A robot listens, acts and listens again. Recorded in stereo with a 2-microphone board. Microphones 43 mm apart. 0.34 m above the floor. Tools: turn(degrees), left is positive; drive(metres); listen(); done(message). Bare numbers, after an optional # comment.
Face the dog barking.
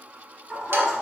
turn(-30)
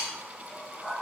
turn(-30)
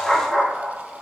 turn(30)
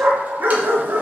# So it is at 65° right.
turn(-65)
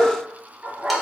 # The dog barking is now 35° right.
turn(-35)
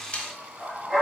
done("Facing the dog barking.")